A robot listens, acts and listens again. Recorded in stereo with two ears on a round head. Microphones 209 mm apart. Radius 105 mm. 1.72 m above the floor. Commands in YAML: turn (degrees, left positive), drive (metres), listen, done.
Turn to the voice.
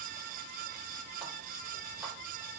listen: true
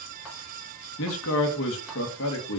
turn: 60
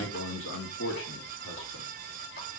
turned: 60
turn: 65
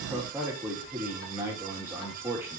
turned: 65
turn: -10
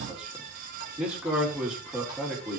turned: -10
done: "Found it: a man speaking, straight ahead, 2 to 4 m away."